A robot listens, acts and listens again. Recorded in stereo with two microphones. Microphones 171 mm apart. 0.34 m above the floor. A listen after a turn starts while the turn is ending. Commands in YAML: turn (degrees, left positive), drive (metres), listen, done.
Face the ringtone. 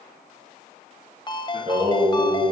turn: 30
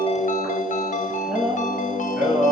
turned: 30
listen: true
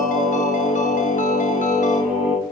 listen: true
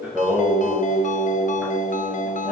done: "I heard a ringtone, but can't make it out now. It was about straight ahead or 120° left."